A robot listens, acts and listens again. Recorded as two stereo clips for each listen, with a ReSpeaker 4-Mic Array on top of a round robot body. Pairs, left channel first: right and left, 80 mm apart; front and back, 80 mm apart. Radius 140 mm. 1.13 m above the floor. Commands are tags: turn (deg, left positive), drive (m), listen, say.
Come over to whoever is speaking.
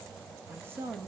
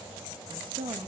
<turn deg="155"/>
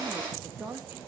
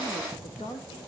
<turn deg="15"/>
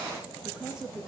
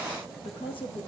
<drive m="1.0"/>
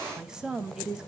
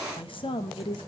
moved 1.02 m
<turn deg="10"/>
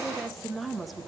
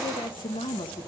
<drive m="1.0"/>
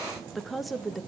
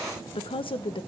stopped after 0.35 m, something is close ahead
<say>I am next to the woman speaking.</say>